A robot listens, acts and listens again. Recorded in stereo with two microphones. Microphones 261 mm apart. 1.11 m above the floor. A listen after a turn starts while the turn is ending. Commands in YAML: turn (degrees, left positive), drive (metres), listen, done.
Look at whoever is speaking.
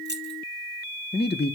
turn: 40
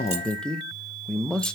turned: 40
done: "Found it: a man speaking, straight ahead."